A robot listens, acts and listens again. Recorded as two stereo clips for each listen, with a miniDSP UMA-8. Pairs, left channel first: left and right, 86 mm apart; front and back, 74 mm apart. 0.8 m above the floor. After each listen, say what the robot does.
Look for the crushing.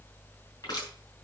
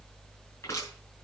Turn 45° left.
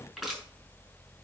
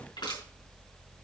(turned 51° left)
Found it: crushing, straight ahead.